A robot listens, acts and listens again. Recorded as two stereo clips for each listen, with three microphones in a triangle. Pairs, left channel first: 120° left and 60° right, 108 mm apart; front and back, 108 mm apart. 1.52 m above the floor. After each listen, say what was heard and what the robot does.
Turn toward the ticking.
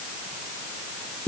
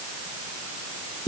Keep listening.
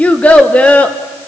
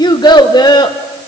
Keep listening.
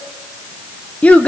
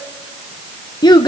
I can't make out ticking, only a child speaking.